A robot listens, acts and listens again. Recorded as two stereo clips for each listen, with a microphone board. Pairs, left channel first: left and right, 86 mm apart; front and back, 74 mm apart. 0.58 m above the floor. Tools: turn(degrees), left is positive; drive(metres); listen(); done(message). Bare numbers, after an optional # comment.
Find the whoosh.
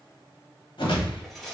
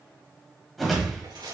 # The whoosh: 90° left.
turn(90)
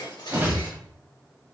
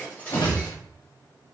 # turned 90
# The whoosh is now 25° right.
turn(-25)
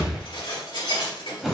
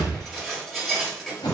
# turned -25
done("Facing the whoosh, 1 to 2 m away.")